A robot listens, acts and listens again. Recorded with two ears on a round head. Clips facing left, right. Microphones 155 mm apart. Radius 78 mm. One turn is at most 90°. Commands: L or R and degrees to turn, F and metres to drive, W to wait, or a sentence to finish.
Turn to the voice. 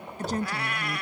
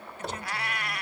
L35
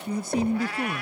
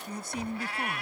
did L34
L90
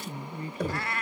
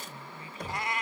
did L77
L35
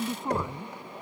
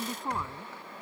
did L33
Facing the woman speaking.